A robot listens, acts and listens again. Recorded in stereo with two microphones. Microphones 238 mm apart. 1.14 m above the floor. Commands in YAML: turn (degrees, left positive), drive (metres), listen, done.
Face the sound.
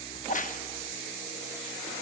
turn: 35
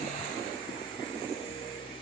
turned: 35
listen: true
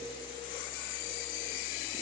done: "I heard a crack, but can't make it out now. It was about straight ahead or 110° left."